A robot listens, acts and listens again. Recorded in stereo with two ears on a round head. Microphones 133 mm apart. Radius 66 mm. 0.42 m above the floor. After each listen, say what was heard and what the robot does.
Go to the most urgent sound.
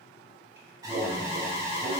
The alarm: about 25° right or 155° right. Turn 25° right.
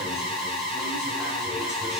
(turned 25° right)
Drive 1.0 m forward.
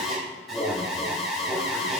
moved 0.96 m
Drive 1.0 m forward.
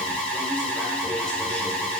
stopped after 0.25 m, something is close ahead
I am next to the alarm.